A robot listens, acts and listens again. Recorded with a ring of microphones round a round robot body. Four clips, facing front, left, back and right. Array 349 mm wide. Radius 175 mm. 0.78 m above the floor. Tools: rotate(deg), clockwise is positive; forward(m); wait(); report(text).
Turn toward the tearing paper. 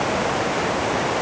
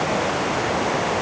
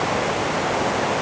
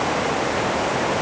wait()
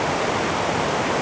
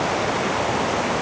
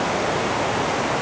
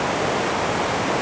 wait()
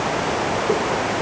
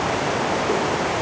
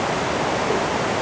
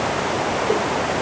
report("I can't make out tearing paper to turn to.")